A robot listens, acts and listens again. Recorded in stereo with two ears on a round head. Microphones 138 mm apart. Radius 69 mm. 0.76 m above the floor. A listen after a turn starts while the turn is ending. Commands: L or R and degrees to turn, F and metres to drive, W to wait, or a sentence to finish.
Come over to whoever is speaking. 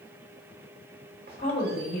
L60
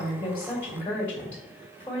L15
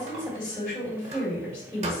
L10
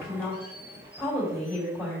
F1.0
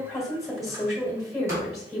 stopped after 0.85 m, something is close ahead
Arrived at the woman speaking, straight ahead.